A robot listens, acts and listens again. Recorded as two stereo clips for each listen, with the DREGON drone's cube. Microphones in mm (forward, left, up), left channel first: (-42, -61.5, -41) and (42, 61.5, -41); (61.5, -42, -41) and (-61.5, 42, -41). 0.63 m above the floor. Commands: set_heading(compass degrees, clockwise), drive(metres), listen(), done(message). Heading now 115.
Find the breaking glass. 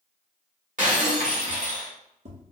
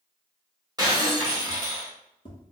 set_heading(30)
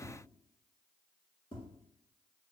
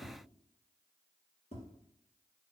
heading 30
done("Facing where the breaking glass came from. I can't hear it now.")